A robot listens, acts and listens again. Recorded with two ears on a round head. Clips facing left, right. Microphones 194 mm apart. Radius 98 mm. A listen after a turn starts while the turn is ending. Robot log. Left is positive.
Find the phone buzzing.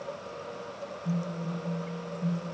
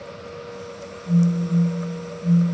note: The phone buzzing: about 35° left or 145° left.
cmd yaw +35
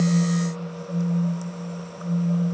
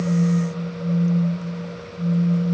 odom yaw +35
end: Found it: a phone buzzing, straight ahead.